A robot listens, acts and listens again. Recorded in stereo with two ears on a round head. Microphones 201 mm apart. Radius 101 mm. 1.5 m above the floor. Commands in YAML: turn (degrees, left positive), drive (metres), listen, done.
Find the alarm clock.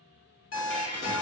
turn: 60
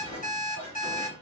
turn: 40
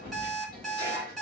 done: "Found it: an alarm clock, straight ahead, 1 to 2 m away."